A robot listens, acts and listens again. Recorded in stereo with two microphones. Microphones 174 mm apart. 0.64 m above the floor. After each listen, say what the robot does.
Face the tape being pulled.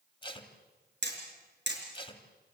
Turn 30° left.
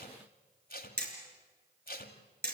Turn 125° left.
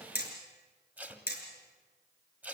Turn 10° right.
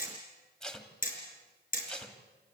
Facing the tape being pulled, 1 to 2 m away.